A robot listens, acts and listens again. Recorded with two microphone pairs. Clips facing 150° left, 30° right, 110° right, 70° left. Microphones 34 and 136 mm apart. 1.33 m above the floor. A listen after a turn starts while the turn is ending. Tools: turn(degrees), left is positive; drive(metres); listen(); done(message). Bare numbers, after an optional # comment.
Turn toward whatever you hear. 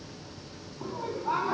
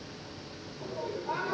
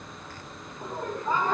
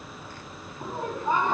# The laughter: 135° left.
turn(135)
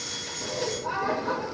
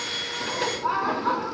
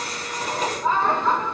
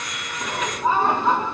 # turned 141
done("Facing the laughter.")